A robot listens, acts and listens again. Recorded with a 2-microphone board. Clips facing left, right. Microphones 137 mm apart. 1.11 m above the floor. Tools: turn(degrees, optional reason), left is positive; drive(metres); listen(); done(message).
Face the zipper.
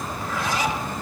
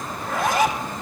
turn(degrees=-55, reason="The zipper: about 55° right or 125° right.")
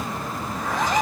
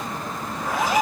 done("Found it: a zipper, straight ahead.")